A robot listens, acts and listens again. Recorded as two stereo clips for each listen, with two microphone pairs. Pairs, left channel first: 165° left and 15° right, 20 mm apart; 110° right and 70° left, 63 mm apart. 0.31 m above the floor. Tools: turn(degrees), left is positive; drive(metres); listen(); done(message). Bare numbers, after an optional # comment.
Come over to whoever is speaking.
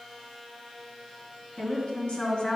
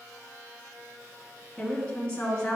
# The woman speaking: 175° left.
turn(175)
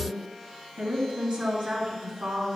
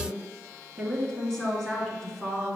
# The woman speaking is now 30° right.
turn(-30)
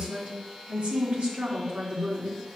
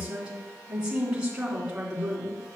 drive(1.0)
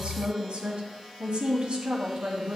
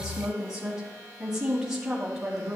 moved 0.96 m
drive(1.0)
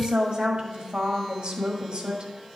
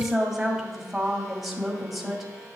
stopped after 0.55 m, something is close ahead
# The woman speaking is now 15° right.
turn(-15)
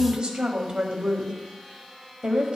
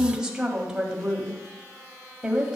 done("Arrived at the woman speaking, straight ahead.")